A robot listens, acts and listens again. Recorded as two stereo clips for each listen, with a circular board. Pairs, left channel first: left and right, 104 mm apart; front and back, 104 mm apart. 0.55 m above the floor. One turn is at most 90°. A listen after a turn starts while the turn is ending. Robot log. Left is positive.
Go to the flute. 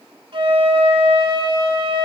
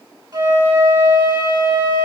note: The flute: 135° right.
cmd yaw -90
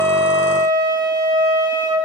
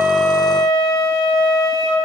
note: The flute is now 50° right.
cmd yaw -50
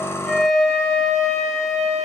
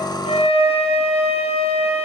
cmd fwd 1.0
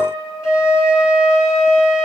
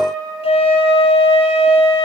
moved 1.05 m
cmd fwd 1.0
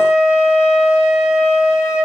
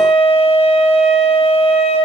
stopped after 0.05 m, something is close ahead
end: Something is in my way. I am facing the flute but have not reached it.